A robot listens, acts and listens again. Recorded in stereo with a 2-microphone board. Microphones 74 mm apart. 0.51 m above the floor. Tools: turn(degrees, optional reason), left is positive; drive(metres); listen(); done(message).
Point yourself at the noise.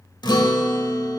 turn(degrees=90)
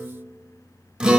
turn(degrees=-10, reason="So it is at 10° right.")
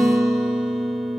done("Facing the guitar.")